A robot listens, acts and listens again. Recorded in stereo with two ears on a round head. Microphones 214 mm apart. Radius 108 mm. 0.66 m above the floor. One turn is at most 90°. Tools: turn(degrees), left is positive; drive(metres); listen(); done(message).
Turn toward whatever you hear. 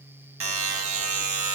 turn(degrees=-60)
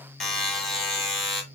done("Found it: a buzzer, straight ahead.")